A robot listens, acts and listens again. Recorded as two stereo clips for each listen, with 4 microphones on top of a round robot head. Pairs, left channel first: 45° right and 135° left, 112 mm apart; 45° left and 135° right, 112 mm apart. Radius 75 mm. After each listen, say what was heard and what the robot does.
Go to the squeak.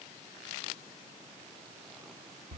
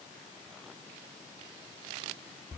Keep listening.
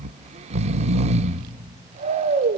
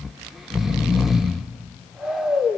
Keep listening.
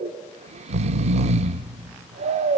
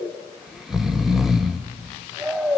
I can't make out a squeak, only snoring.